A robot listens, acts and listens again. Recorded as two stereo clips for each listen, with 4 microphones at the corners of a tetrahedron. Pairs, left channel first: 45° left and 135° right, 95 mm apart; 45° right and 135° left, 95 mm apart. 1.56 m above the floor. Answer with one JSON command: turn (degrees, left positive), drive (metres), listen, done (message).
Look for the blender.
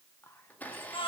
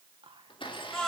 {"turn": -25}
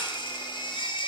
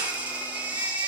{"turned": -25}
{"listen": true}
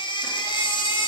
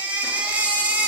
{"listen": true}
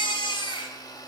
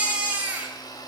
{"done": "Found it: a blender, straight ahead, 1 to 2 m away."}